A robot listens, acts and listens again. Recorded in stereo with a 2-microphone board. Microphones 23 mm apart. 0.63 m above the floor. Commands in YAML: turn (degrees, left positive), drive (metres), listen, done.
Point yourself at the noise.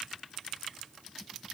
listen: true
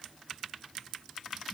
listen: true
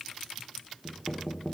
turn: 20
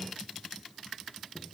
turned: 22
listen: true
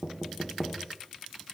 done: "Found it: knocking, straight ahead."